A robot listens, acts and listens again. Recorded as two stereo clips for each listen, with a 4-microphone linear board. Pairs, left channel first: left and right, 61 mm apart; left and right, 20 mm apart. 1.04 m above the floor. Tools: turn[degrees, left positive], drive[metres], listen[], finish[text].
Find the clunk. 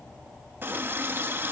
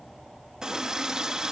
Action: listen[]
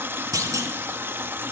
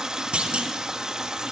Action: turn[-90]
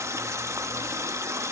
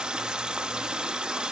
Action: finish[Facing where the clunk came from. I can't hear it now.]